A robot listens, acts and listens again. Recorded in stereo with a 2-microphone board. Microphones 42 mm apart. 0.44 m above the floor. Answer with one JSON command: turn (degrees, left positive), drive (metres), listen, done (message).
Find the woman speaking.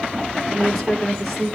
{"turn": 30}
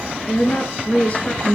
{"turn": 145}
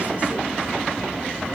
{"listen": true}
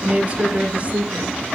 {"turn": -30}
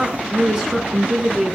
{"done": "Found it: a woman speaking, straight ahead."}